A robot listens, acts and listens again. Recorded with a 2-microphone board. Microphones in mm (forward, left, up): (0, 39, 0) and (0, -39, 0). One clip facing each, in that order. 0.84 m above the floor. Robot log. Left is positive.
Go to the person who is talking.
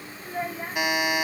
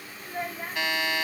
cmd yaw +30
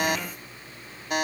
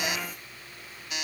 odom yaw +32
cmd idle
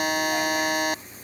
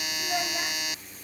cmd idle
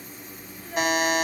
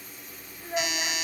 note: So it is at 25° right.
cmd yaw -25
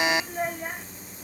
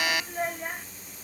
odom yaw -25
cmd fwd 1.0
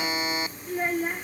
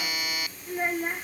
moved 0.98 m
cmd fwd 1.0
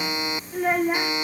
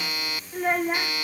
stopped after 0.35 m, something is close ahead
end: Arrived at the child speaking, straight ahead.